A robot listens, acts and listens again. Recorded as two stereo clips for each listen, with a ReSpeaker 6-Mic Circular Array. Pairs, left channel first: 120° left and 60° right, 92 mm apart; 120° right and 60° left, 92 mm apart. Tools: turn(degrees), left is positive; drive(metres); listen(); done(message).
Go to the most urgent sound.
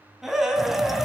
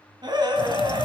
turn(degrees=25)
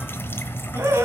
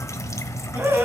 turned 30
drive(metres=1.0)
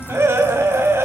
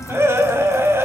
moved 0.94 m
drive(metres=1.0)
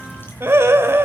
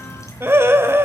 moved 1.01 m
drive(metres=1.0)
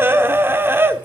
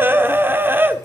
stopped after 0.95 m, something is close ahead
done("Arrived at the scream, straight ahead.")